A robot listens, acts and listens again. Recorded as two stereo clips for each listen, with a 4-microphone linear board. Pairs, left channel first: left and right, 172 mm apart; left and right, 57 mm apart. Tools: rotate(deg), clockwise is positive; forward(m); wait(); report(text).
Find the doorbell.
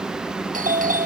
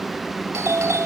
rotate(50)
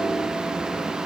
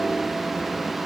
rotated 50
wait()
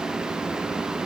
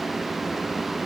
wait()
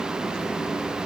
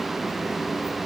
report("I heard a doorbell, but can't make it out now. It was about straight ahead or 80° right.")